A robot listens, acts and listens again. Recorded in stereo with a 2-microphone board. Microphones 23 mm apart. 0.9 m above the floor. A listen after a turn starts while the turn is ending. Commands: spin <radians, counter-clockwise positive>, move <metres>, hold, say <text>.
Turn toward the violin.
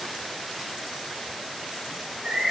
hold
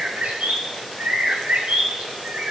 hold
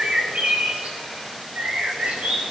say I can't make out a violin to turn to.